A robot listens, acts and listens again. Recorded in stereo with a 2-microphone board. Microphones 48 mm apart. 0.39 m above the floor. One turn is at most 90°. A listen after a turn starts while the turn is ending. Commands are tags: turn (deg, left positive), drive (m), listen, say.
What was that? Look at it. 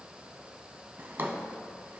<turn deg="-55"/>
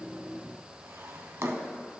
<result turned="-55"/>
<turn deg="-70"/>
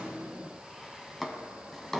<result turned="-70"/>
<say>Found it: a drawer, straight ahead, under 1 m away.</say>